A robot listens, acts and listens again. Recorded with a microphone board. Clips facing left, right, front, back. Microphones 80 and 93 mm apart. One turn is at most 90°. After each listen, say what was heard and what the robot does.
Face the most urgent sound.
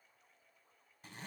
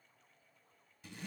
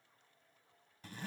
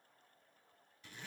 Keep listening.
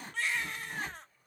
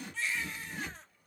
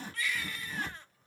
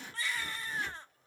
The baby crying: 120° left. Turn 90° left.
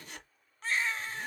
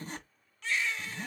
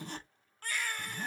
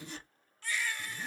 The baby crying is now 40° left. Turn 40° left.
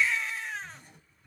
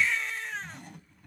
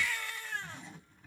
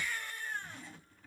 Found it: a baby crying, straight ahead, 1 to 2 m away.